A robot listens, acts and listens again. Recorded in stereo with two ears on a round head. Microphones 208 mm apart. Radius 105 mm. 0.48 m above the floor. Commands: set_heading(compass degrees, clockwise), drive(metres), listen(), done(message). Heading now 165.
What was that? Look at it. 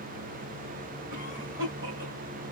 set_heading(220)
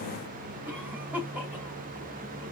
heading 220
done("Facing the cough, 2 to 4 m away.")